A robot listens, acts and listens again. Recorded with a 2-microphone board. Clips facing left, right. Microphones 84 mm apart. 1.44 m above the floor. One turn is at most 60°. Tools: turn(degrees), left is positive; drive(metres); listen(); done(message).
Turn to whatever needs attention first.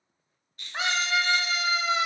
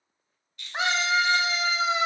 turn(degrees=-15)
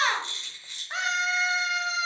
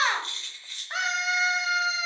done("Found it: a scream, straight ahead.")